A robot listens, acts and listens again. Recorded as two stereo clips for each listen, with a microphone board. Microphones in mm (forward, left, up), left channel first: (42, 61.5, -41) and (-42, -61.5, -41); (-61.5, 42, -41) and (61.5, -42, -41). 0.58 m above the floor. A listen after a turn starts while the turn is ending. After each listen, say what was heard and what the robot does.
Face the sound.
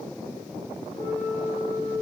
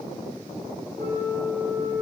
The flute: 90° left. Turn 90° left.
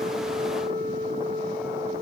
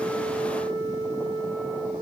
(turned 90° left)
The flute is now 20° left. Turn 20° left.
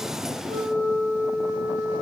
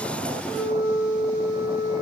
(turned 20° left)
Found it: a flute, straight ahead, 2 to 4 m away.